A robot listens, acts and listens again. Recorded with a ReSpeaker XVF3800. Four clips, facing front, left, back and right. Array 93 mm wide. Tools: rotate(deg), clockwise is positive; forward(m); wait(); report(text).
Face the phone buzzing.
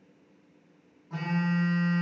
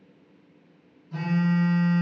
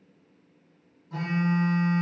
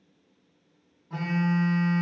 rotate(65)
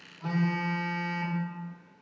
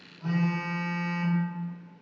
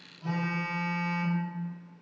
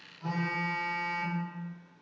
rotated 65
report("Facing the phone buzzing.")